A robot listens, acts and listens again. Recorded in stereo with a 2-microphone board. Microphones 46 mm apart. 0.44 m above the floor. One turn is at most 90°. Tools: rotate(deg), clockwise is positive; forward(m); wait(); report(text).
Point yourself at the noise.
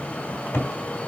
rotate(-75)
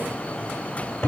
rotate(-25)
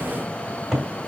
report("Facing the cupboard door.")